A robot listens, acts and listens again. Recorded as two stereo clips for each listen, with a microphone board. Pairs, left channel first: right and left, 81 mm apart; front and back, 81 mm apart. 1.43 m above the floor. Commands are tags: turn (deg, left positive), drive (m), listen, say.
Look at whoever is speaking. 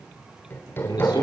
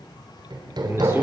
<turn deg="-120"/>
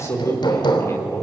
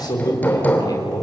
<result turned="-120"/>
<turn deg="-40"/>
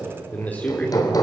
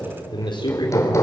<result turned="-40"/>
<turn deg="-20"/>
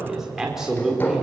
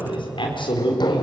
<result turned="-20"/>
<say>Facing the man speaking.</say>